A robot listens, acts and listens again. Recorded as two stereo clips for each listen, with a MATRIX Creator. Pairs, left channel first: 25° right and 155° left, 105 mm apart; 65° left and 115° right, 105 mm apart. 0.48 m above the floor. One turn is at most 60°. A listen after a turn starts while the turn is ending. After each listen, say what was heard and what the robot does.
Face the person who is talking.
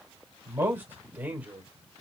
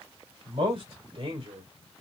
The man speaking: 130° right. Turn 60° right.
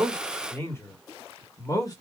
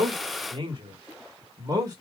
The man speaking is now 65° right. Turn 60° right.
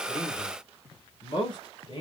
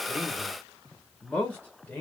Found it: a man speaking, straight ahead.